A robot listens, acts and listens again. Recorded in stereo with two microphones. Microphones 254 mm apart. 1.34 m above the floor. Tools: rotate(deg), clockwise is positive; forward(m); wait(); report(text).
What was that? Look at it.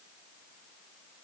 wait()
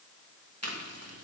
rotate(90)
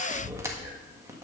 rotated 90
rotate(10)
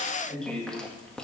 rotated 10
report("Facing the chewing, 1 to 2 m away.")